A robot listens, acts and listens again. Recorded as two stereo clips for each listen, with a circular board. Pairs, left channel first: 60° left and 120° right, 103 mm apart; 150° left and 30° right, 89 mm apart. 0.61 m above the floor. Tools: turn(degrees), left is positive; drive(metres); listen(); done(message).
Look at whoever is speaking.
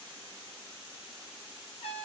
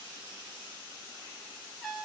listen()
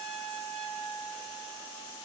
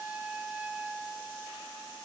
listen()
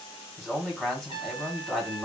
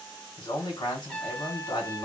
turn(degrees=150)
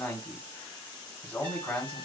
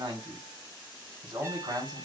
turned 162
turn(degrees=-10)
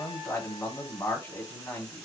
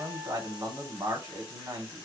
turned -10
done("Found it: a man speaking, straight ahead.")